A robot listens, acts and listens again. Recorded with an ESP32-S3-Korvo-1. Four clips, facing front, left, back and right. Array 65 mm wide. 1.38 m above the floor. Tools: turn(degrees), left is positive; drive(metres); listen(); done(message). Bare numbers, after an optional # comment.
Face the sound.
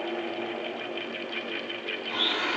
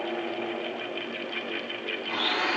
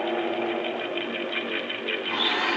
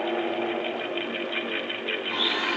# The blender: 160° left.
turn(160)
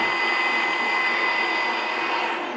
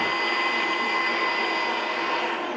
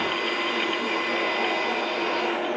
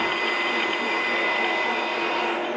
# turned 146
# The blender is now 15° left.
turn(15)
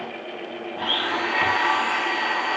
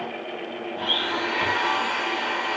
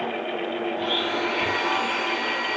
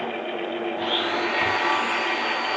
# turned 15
done("Facing the blender.")